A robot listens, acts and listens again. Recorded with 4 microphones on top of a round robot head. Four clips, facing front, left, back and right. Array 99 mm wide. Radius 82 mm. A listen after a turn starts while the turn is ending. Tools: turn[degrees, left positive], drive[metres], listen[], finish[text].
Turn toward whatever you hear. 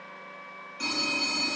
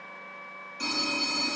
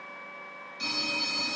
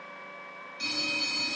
Thought: The phone ringing: 45° left.
Action: turn[45]
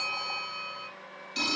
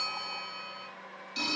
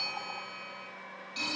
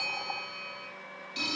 Action: finish[Facing the phone ringing, 2 to 4 m away.]